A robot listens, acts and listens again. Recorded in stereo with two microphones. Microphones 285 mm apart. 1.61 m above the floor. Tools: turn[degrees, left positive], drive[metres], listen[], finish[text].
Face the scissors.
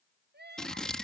Action: turn[30]
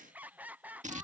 Thought: So it is at 25° right.
Action: turn[-25]
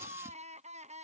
Action: listen[]
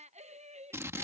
Thought: The scissors is now 10° right.
Action: turn[-10]
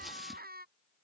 Action: listen[]
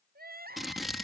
Action: finish[Found it: scissors, straight ahead.]